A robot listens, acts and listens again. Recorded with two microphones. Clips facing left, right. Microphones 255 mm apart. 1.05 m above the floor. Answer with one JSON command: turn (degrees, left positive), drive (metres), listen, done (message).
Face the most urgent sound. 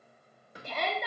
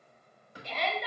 {"turn": 50}
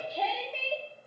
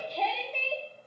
{"turn": 10}
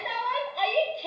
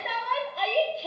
{"done": "Facing the shout, under 1 m away."}